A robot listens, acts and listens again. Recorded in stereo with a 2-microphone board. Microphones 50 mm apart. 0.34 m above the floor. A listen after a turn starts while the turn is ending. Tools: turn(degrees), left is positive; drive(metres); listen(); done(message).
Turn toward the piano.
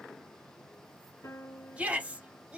turn(degrees=70)
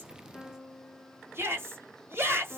done("Found it: a piano, straight ahead, 1 to 2 m away.")